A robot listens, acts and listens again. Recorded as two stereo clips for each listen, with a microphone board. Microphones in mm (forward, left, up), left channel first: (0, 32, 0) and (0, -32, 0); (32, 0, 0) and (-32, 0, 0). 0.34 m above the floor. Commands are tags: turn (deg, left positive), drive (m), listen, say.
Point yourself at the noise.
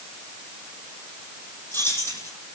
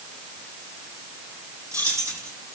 <turn deg="140"/>
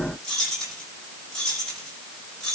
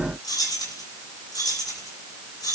<say>Found it: keys jangling, straight ahead, over 4 m away.</say>